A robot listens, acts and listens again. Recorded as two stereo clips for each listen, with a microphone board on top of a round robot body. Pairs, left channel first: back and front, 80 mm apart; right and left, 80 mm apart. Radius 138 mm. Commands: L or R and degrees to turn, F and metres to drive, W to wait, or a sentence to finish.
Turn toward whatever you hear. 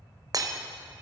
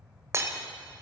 L40
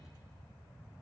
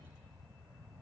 I heard breaking glass from this way, but can't make it out now.